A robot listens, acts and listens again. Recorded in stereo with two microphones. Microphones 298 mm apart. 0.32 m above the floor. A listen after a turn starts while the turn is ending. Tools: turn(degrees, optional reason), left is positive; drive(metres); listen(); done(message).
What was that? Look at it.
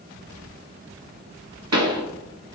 turn(degrees=-60, reason="The pop: about 60° right or 120° right.")
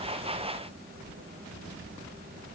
listen()
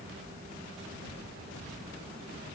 done("I heard a pop, but can't make it out now. It was about straight ahead or 60° right.")